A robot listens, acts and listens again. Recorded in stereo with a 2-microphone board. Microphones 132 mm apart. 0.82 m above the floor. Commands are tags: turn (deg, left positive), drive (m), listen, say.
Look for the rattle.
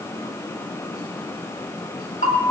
<listen/>
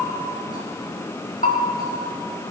<listen/>
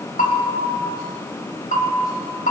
<say>I can't make out a rattle to turn to.</say>